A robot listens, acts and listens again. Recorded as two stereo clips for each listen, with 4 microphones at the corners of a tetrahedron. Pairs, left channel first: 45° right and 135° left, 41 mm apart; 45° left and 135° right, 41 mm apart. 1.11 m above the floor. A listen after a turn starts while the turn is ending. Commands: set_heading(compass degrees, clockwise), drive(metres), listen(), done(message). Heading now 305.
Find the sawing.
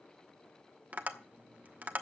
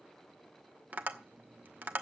listen()
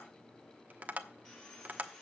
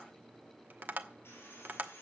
set_heading(275)
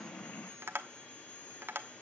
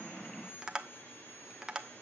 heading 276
done("Facing the sawing, over 4 m away.")